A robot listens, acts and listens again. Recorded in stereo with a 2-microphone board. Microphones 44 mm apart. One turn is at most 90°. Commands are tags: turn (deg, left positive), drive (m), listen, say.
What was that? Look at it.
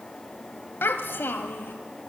<turn deg="55"/>
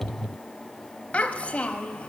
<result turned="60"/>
<turn deg="35"/>
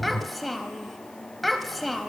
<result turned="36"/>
<say>Facing the child speaking, 1 to 2 m away.</say>